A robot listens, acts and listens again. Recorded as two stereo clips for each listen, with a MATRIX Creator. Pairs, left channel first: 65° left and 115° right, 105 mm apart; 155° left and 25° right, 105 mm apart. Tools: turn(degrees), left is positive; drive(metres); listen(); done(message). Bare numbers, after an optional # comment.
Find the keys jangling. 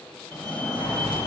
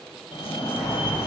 # The keys jangling: 40° left.
turn(40)
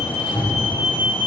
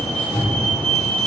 done("Found it: keys jangling, straight ahead.")